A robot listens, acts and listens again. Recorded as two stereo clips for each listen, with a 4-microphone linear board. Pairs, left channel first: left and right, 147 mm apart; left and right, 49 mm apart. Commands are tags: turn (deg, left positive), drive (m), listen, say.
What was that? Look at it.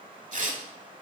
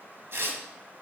<turn deg="-60"/>
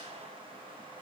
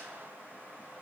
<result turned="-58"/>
<listen/>
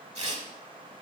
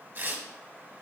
<turn deg="-55"/>
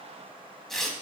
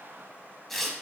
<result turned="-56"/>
<say>Found it: tearing paper, straight ahead, 1 to 2 m away.</say>